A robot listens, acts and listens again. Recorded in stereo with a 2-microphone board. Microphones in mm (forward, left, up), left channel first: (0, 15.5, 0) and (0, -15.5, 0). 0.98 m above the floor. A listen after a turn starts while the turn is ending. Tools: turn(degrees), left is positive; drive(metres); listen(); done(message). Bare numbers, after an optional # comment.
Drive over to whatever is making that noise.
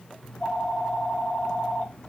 # The phone ringing: about 30° left or 150° left.
turn(30)
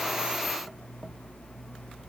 # So it is at 120° left.
turn(120)
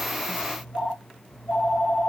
# The phone ringing is now 25° left.
turn(25)
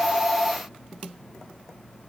# The phone ringing is now 20° right.
turn(-20)
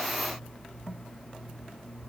drive(1.0)
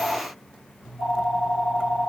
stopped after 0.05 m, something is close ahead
done("Blocked. The phone ringing is further on, straight ahead.")